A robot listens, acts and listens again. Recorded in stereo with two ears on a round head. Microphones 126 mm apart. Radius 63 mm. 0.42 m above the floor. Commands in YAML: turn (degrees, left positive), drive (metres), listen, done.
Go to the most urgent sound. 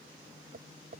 listen: true
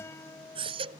turn: -40
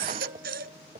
turn: -100
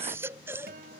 turn: -15
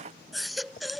drive: 1.0
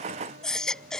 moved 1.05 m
drive: 1.0
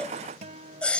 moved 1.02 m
turn: 10
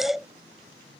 drive: 1.0
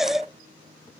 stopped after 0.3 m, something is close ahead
done: "I am next to the baby crying."